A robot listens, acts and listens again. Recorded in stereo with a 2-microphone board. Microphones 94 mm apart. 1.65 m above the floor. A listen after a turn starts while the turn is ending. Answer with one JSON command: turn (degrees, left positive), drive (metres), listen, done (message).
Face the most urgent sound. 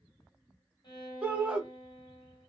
{"turn": -30}
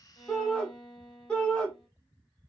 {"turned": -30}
{"turn": 15}
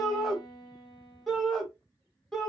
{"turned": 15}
{"done": "Found it: a shout, straight ahead."}